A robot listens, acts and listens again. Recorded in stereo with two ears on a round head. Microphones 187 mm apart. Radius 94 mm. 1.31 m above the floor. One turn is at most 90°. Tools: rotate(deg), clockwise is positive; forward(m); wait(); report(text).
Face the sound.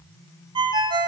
rotate(25)
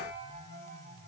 wait()
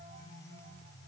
wait()
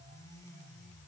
report("I heard a ringtone, but can't make it out now. It was about straight ahead or 130° right.")